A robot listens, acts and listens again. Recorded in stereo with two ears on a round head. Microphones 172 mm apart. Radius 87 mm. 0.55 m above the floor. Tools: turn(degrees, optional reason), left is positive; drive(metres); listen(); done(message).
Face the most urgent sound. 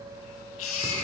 turn(degrees=90)
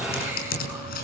listen()
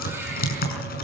listen()
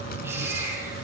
turn(degrees=-10, reason="The baby crying is now 10° right.")
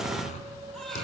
listen()
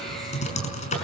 listen()
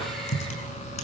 done("Facing where the baby crying came from. I can't hear it now.")